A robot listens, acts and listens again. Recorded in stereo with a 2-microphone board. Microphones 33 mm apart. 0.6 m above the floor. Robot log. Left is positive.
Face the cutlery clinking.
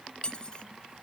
note: The cutlery clinking: about 35° left or 145° left.
cmd yaw +35
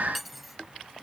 end: Facing the cutlery clinking.